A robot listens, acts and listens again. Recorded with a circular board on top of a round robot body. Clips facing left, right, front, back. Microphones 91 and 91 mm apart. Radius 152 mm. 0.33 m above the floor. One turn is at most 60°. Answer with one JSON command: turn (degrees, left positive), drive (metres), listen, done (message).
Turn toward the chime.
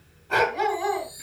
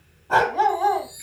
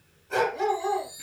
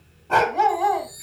{"turn": 60}
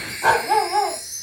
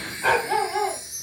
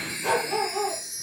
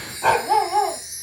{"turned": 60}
{"turn": 60}
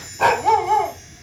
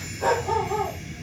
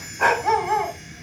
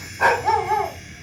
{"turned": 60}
{"turn": 20}
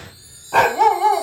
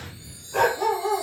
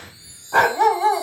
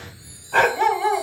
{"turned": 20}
{"done": "Facing the chime, over 4 m away."}